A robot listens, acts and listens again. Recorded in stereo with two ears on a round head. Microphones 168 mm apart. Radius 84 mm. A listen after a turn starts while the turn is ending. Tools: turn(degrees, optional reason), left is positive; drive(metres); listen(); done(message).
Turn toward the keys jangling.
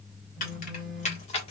turn(degrees=35, reason="The keys jangling: about 35° left or 145° left.")
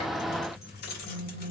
turn(degrees=125, reason="So it is at 125° left.")
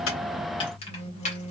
turn(degrees=35, reason="The keys jangling is now 35° left.")
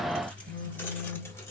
listen()
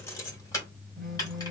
turn(degrees=20, reason="The keys jangling is now 20° left.")
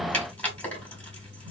turn(degrees=10, reason="The keys jangling is now 10° left.")
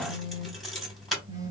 done("Found it: keys jangling, straight ahead, 2 to 4 m away.")